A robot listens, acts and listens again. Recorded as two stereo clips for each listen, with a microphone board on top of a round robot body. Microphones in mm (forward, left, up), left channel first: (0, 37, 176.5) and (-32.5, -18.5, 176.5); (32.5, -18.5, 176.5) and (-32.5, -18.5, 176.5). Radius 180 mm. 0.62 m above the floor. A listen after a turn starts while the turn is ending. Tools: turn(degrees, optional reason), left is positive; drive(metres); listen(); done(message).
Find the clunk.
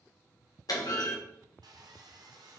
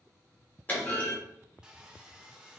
turn(degrees=60, reason="The clunk: 60° left.")
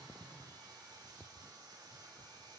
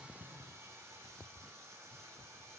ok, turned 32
turn(degrees=30, reason="Nothing new. It was at 30° left.")
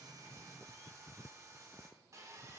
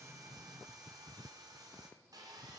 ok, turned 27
done("I heard a clunk from this way, but can't make it out now.")